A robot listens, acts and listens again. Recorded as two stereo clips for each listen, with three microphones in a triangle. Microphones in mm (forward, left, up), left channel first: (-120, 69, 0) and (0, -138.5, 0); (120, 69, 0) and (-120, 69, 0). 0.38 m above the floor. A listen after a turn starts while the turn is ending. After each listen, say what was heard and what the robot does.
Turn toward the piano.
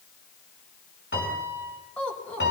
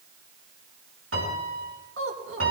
The piano: 160° left. Turn 160° left.
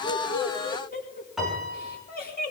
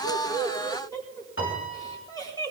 The piano is now 30° left. Turn 30° left.
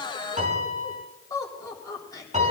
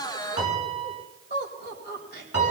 Facing the piano, over 4 m away.